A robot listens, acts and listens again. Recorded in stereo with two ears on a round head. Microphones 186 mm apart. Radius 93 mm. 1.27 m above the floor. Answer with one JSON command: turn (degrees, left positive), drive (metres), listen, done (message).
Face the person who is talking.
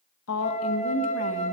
{"turn": 90}
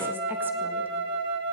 {"listen": true}
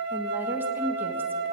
{"turn": -10}
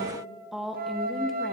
{"done": "Facing the woman speaking, 1 to 2 m away."}